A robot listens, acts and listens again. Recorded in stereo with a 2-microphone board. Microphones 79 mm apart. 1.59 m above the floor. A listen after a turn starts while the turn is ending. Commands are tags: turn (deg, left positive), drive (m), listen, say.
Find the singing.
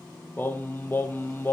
<turn deg="25"/>
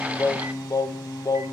<turn deg="125"/>
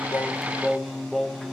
<say>Found it: singing, straight ahead.</say>